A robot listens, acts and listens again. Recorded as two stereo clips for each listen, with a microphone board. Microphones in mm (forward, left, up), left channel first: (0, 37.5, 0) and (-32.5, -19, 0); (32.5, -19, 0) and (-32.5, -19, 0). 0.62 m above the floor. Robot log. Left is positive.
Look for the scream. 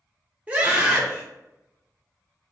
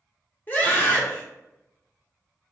note: The scream: 55° right.
cmd yaw -55
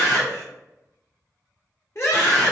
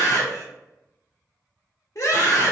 note: The scream is now 20° left.
cmd yaw +20
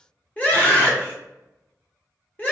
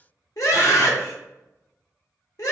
end: Found it: a scream, straight ahead.